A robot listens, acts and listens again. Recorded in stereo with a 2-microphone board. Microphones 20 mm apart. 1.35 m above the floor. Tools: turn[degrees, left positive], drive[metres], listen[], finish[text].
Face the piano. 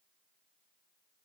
Action: listen[]
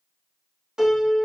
Thought: The piano: about 35° right or 145° right.
Action: turn[-35]
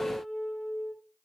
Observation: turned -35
Action: finish[Facing the piano.]